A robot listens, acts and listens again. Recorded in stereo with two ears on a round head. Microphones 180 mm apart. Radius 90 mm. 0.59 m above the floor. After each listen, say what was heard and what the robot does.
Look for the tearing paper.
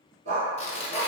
The tearing paper: about 30° left or 150° left. Turn 30° left.
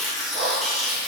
Found it: tearing paper, straight ahead, under 1 m away.